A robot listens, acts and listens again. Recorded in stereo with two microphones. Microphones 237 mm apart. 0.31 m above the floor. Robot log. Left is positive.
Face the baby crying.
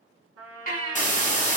note: The baby crying: about 40° left or 140° left.
cmd yaw +40
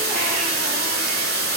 cmd idle
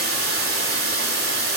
cmd idle
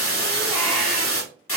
end: I heard a baby crying, but can't make it out now. It was about straight ahead or 100° left.